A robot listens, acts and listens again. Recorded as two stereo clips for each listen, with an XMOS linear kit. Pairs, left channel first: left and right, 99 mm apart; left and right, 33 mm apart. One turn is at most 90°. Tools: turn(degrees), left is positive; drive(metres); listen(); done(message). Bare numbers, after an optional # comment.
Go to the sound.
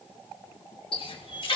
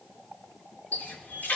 # The running tap: about 60° left or 120° left.
turn(60)
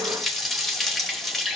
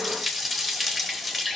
drive(1.0)
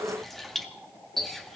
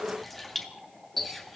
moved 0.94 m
drive(1.0)
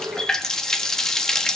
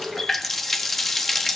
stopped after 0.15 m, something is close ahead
done("Arrived at the running tap, straight ahead.")